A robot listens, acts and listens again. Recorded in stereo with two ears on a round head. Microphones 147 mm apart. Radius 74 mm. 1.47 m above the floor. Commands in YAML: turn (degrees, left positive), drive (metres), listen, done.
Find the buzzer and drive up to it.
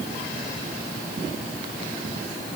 listen: true
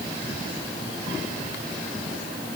listen: true
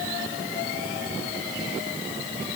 done: "I can't make out a buzzer."